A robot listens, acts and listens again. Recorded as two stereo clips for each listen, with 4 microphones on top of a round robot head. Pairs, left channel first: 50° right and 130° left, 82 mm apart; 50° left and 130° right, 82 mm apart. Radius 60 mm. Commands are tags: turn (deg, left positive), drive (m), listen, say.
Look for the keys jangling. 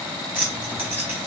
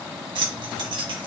<turn deg="-160"/>
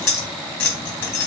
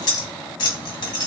<turn deg="10"/>
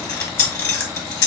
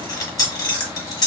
<say>Facing the keys jangling, 1 to 2 m away.</say>